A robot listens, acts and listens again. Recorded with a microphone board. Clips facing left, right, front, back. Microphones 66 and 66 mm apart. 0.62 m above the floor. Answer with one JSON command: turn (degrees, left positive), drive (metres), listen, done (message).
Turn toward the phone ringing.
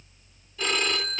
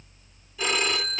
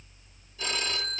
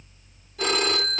{"turn": -170}
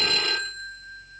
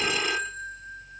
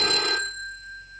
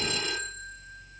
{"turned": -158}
{"turn": -10}
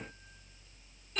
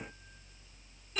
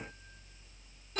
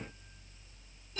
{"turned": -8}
{"done": "Facing the phone ringing, 1 to 2 m away."}